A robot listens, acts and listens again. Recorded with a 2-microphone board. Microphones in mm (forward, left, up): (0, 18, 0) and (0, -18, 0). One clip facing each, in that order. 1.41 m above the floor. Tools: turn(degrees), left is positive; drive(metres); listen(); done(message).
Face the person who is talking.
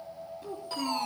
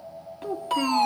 turn(degrees=-75)
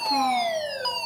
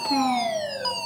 listen()
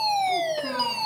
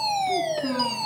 done("Found it: a child speaking, straight ahead, 2 to 4 m away.")